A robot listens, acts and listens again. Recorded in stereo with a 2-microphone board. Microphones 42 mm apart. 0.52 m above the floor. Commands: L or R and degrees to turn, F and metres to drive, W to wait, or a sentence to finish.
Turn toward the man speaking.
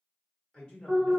L25
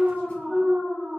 W
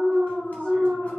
W
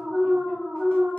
I heard a man speaking, but can't make it out now. It was about straight ahead or 130° left.